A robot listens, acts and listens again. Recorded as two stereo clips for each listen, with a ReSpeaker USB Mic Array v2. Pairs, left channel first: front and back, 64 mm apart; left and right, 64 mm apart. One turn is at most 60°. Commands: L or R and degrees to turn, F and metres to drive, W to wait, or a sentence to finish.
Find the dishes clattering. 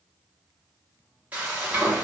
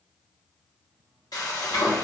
W
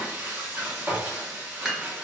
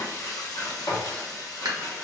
R60
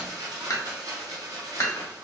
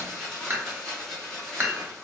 R35
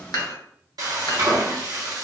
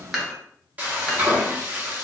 Facing the dishes clattering.